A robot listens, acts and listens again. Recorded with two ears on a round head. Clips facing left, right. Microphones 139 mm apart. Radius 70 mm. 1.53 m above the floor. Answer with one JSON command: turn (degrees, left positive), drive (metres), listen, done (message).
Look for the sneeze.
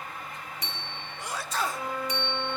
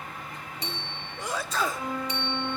{"turn": -70}
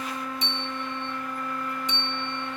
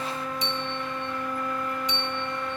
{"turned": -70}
{"listen": true}
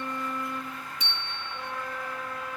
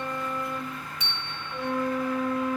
{"done": "I heard a sneeze, but can't make it out now. It was about straight ahead or 40° right."}